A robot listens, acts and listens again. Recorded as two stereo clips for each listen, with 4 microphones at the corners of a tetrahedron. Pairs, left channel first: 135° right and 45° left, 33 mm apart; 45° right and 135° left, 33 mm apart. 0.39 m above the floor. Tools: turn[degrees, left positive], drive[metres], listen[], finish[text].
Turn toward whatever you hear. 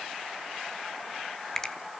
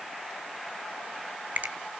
Thought: The finger snap: 155° left.
Action: turn[155]
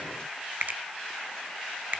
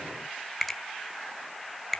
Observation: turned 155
Thought: The finger snap is now 40° left.
Action: turn[40]
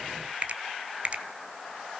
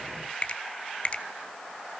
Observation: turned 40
Action: finish[Facing the finger snap, 1 to 2 m away.]